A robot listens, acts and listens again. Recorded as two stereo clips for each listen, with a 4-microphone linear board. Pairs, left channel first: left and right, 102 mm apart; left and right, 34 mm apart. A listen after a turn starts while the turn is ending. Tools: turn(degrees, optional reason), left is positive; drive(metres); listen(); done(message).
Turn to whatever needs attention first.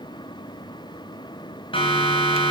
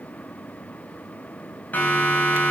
turn(degrees=55, reason="The siren: about 55° left or 125° left.")
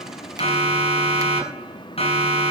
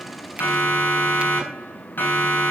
turn(degrees=70, reason="So it is at 70° left.")
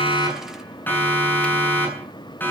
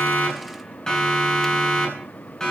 turn(degrees=20, reason="The siren is now 20° left.")
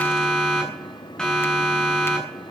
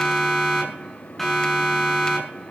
turn(degrees=10, reason="The siren is now 10° left.")
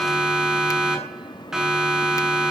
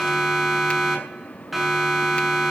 done("Found it: a siren, straight ahead.")